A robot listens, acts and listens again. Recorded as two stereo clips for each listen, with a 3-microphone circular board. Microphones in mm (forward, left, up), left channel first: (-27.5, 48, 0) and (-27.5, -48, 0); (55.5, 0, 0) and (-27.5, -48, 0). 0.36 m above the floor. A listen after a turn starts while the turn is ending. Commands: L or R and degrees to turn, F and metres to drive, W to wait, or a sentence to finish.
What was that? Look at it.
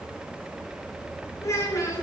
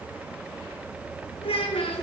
L35
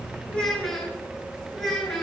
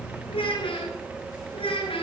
Facing the child speaking, 2 to 4 m away.